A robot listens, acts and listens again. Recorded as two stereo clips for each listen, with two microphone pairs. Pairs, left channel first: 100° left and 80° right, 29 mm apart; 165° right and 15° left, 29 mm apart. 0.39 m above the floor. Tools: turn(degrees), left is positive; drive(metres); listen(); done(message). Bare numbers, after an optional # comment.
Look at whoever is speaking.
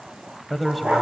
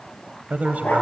# The man speaking: 10° left.
turn(10)
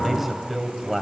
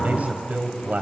done("Facing the man speaking, 1 to 2 m away.")